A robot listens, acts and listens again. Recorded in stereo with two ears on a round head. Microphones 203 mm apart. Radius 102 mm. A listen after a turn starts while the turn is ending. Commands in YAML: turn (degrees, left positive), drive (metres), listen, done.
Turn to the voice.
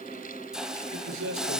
turn: -60
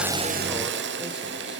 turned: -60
listen: true
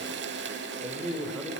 done: "Facing the man speaking, 2 to 4 m away."